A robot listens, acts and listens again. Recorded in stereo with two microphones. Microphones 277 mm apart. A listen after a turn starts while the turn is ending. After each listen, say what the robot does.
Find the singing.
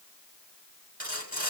Keep listening.
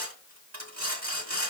Keep listening.
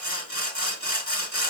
I can't make out singing, only sawing.